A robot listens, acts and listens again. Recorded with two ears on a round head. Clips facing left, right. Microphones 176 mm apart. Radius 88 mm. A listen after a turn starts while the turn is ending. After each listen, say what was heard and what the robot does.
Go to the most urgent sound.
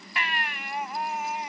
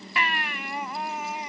The baby crying: about 75° right or 105° right. Turn 75° right.
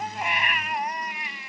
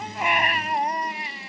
So it is at 30° right. Turn 30° right.
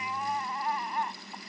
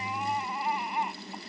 The baby crying is now 10° right. Turn 10° right.
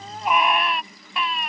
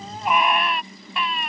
Drive 1.0 m forward.
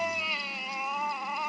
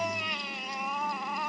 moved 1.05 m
Drive 1.0 m forward.
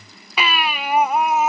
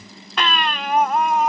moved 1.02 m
Drive 1.0 m forward.
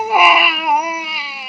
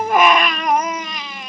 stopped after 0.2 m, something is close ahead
Arrived at the baby crying, straight ahead.